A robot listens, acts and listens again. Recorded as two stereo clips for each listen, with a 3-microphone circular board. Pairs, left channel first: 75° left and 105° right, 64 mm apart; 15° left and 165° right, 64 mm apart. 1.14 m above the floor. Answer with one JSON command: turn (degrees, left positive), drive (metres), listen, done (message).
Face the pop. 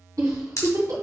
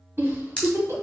{"turn": 80}
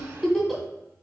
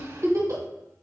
{"done": "I heard a pop from this way, but can't make it out now."}